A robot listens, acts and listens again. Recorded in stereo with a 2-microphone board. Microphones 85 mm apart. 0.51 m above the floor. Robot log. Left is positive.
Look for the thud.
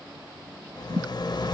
note: The thud: about 40° right or 140° right.
cmd yaw -40
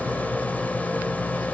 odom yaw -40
cmd idle
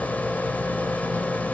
end: I heard a thud, but can't make it out now. It was about straight ahead or 100° right.